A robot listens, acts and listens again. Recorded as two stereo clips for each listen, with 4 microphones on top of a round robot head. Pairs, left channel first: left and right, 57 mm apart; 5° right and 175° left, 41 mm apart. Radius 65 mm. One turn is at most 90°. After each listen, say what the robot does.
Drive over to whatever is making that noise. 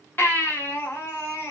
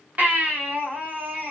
Turn 90° left.
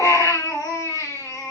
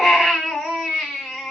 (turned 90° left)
Turn 90° left.
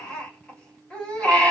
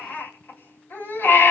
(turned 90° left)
Turn 15° left.
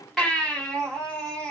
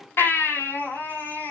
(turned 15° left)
Drive 1.0 m forward.
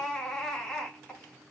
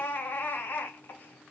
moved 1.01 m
Turn 10° left.
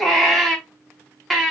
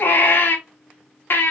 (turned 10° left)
Drive 1.0 m forward.
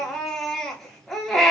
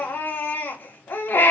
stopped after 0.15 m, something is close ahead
Arrived at the baby crying, straight ahead.